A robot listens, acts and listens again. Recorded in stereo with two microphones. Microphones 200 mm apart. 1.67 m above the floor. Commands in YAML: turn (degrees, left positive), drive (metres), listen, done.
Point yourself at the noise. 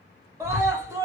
turn: -30
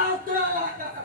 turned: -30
turn: -135
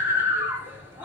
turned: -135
turn: -10
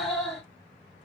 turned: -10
done: "Facing the scream, 2 to 4 m away."